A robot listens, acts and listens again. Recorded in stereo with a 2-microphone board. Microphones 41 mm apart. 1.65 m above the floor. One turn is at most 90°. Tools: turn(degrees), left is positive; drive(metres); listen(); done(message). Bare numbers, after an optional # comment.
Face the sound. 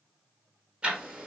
# The ticking: about 30° right or 150° right.
turn(-30)
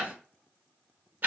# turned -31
# So it is at 115° right.
turn(-90)
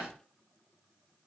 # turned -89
# Nothing new. It was at 30° right.
turn(-30)
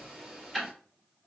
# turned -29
done("Found it: ticking, straight ahead, 1 to 2 m away.")